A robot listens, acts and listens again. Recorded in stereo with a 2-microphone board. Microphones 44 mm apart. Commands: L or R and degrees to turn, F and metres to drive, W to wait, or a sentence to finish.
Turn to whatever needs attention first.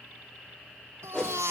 R90
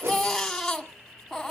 Facing the baby crying, 1 to 2 m away.